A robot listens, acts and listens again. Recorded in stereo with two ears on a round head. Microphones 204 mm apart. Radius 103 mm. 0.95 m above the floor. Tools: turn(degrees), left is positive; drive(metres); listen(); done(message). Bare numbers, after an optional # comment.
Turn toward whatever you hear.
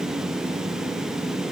listen()
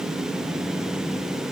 listen()
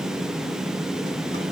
done("I can't make out anything to turn to.")